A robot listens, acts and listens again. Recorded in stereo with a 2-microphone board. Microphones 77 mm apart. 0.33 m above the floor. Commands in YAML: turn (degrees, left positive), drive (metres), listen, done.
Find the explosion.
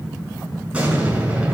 turn: -15
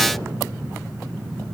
listen: true
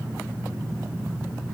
done: "I heard an explosion, but can't make it out now. It was about straight ahead or 150° right."